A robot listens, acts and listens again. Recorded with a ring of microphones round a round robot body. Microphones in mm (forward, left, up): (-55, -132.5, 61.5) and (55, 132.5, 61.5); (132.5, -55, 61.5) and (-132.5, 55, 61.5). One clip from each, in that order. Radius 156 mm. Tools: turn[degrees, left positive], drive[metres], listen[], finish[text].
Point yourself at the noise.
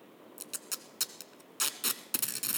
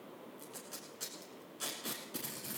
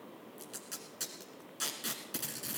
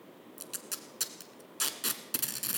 Thought: The tape being pulled: 135° right.
Action: turn[-135]
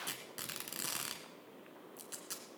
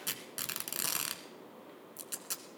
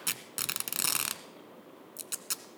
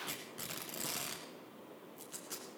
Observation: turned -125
Thought: The tape being pulled is now 10° right.
Action: turn[-10]
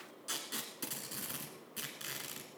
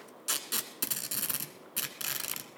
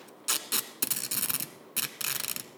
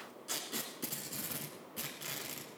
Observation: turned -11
Action: finish[Found it: tape being pulled, straight ahead.]